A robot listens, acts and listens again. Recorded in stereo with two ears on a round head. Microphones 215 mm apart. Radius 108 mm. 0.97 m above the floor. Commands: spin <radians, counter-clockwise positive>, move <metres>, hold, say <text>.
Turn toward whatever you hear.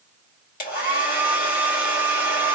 spin 0.70
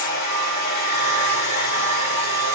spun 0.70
spin 1.75
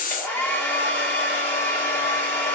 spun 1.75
spin 0.17
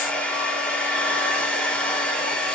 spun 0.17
say Facing the hair dryer, 1 to 2 m away.